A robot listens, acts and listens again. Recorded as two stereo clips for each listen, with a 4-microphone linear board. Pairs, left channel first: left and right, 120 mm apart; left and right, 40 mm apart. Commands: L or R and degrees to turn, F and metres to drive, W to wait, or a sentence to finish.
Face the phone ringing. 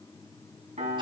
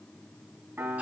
W
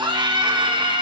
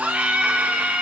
W
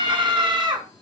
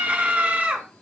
I can't make out a phone ringing to turn to.